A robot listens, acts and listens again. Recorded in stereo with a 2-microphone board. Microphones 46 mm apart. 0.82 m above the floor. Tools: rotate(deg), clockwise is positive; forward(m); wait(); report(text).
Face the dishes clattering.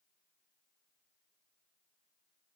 wait()
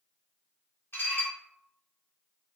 rotate(-60)
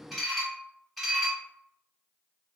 report("Facing the dishes clattering, under 1 m away.")